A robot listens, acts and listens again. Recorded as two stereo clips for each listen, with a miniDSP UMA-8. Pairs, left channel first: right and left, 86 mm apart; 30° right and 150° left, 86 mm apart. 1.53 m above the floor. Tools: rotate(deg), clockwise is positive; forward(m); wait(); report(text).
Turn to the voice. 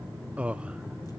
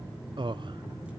rotate(-165)
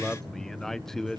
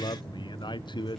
report("Facing the man speaking, under 1 m away.")